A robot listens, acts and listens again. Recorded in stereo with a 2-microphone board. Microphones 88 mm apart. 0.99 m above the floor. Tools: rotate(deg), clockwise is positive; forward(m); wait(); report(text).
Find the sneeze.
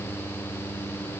wait()
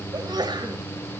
rotate(55)
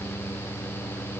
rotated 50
wait()
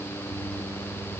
report("I heard a sneeze, but can't make it out now. It was about 5° right or 75° right.")